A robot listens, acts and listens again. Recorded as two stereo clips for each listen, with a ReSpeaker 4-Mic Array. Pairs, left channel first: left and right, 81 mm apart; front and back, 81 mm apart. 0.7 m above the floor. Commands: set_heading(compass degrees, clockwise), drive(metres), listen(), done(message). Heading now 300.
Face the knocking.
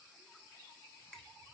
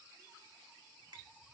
listen()
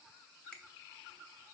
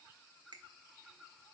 listen()
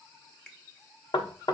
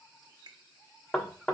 set_heading(225)
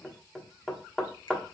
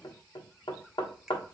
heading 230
done("Facing the knocking.")